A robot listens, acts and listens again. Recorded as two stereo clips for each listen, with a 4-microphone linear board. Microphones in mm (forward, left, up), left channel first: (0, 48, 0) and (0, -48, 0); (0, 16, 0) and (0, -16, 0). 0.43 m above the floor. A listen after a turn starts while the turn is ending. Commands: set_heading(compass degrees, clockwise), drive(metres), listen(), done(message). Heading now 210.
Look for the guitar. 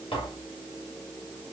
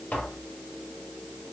listen()
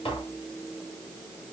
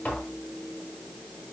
listen()
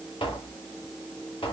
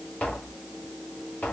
done("I can't make out a guitar to turn to.")